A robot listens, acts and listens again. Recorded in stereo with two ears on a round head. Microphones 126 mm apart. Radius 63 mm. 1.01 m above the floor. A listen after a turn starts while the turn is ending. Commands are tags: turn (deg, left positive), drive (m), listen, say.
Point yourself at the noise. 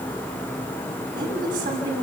<turn deg="-65"/>
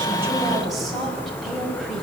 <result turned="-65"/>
<say>Found it: a woman speaking, straight ahead, over 4 m away.</say>